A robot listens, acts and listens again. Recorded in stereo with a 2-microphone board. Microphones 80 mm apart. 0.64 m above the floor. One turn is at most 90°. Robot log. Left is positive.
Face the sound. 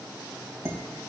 note: The dishes clattering: about 35° right or 145° right.
cmd yaw -35
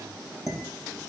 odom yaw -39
end: Facing the dishes clattering.